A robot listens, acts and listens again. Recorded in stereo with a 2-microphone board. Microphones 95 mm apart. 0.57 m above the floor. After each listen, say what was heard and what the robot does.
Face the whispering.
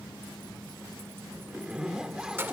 Keep listening.
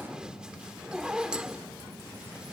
Keep listening.
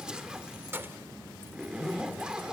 I can't make out whispering to turn to.